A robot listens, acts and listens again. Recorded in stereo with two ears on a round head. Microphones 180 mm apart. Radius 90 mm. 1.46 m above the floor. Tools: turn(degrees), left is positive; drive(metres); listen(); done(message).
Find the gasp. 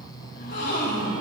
turn(degrees=50)
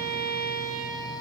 listen()
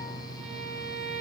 done("I heard a gasp, but can't make it out now. It was about straight ahead or 80° left.")